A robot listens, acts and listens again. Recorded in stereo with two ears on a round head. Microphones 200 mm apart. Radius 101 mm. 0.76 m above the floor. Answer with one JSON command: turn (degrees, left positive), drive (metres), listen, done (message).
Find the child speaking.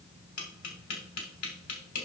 {"listen": true}
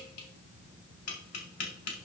{"listen": true}
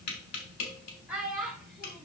{"turn": -30}
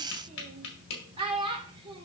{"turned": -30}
{"turn": -155}
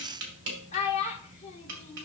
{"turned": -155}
{"turn": 30}
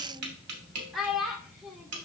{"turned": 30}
{"done": "Facing the child speaking."}